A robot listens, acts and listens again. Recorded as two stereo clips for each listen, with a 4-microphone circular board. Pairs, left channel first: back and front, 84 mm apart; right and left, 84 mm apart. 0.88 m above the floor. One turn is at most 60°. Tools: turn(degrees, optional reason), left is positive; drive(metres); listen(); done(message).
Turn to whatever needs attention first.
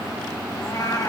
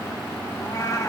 listen()
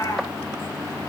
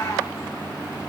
listen()
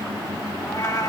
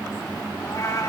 done("I can't make out anything urgent, only a cat meowing.")